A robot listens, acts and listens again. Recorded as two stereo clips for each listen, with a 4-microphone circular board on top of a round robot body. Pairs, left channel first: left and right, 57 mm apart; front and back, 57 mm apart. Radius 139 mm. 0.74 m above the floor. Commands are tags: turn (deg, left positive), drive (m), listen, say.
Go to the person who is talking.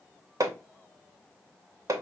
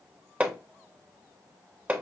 <listen/>
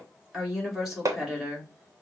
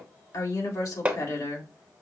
<drive m="1.0"/>
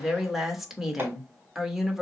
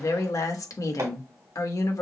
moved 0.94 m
<drive m="1.0"/>
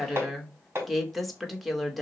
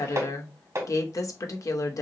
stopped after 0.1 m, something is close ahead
<say>Arrived at the woman speaking, straight ahead.</say>